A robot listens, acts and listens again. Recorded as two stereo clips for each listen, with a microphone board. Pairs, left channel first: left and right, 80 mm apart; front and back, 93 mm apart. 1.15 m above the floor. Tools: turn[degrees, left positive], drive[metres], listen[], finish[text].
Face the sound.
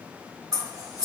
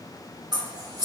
Thought: The scissors: 135° right.
Action: turn[-135]
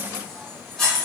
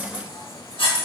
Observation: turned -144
Action: finish[Facing the scissors.]